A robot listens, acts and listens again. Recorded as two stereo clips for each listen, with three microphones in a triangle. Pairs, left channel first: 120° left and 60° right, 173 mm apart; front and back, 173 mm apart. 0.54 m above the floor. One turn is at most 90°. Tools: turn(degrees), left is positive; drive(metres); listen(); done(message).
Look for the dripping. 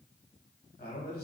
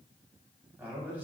listen()
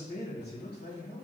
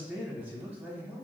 listen()
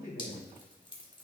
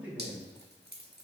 turn(degrees=90)
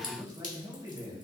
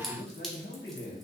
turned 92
turn(degrees=90)
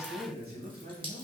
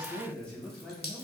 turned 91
done("Found it: dripping, straight ahead.")